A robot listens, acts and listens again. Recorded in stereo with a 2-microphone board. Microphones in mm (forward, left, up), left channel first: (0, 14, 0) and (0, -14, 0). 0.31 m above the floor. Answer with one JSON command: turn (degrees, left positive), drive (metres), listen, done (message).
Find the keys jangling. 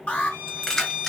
{"turn": 20}
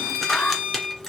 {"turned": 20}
{"turn": 30}
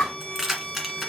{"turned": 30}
{"done": "Found it: keys jangling, straight ahead."}